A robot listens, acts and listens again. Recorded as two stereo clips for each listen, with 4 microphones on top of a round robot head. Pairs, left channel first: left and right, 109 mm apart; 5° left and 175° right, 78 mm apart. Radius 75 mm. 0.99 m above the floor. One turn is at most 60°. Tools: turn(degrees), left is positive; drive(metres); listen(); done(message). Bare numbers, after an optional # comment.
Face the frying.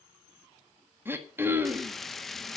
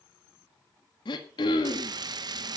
# The frying: straight behind.
turn(60)
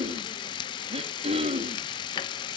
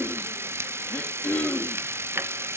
# The frying is now 130° left.
turn(60)
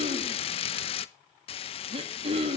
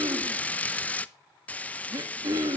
# The frying is now 75° left.
turn(60)
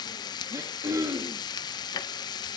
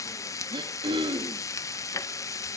# The frying is now 45° left.
turn(45)
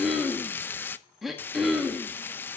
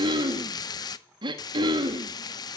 # The frying is now 20° left.
turn(20)
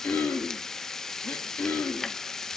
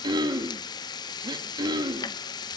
done("Facing the frying, under 1 m away.")